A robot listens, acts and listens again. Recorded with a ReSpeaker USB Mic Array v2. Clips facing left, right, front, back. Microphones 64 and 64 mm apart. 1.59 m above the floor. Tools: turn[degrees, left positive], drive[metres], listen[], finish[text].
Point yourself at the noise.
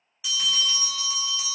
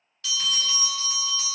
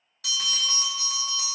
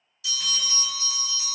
Thought: The bell: 15° left.
Action: turn[15]
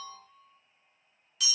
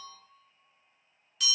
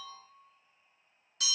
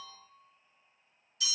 Action: finish[Found it: a bell, straight ahead, under 1 m away.]